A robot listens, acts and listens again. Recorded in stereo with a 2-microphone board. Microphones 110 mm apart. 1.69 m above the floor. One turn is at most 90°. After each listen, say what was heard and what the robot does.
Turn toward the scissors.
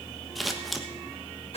Turn 30° left.
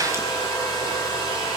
Keep listening.
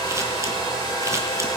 Keep listening.
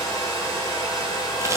I heard scissors, but can't make it out now. It was about 30° right or 150° left.